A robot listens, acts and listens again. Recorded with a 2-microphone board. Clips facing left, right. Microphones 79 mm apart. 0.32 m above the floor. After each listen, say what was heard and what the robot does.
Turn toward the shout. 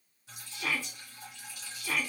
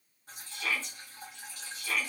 Turn 30° left.
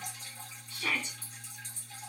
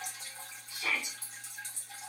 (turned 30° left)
So it is at 15° right. Turn 15° right.
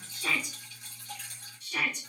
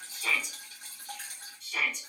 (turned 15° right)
Found it: a shout, straight ahead.